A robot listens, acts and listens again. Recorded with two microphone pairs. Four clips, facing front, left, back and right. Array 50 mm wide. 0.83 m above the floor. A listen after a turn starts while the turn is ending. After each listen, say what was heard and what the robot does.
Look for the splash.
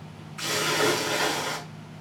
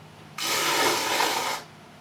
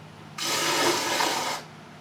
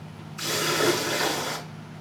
The splash: 105° left. Turn 105° left.
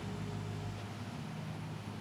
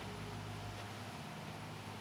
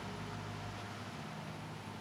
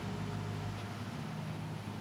I heard a splash from this way, but can't make it out now.